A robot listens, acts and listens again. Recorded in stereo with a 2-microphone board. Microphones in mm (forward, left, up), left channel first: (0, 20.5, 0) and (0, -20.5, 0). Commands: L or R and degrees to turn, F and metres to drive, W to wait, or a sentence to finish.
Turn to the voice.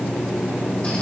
W
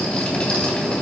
W
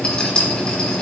I can't make out anyone speaking, only a rattle.